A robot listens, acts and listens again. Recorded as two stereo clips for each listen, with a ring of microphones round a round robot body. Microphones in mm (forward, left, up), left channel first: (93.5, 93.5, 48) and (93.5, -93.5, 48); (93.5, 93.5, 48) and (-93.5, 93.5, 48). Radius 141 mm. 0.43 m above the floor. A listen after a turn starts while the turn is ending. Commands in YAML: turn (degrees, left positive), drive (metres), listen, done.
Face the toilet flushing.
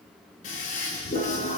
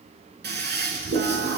turn: 150
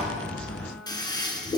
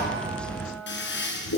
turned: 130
turn: 20
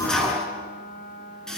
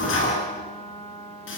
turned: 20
done: "Found it: a toilet flushing, straight ahead, over 4 m away."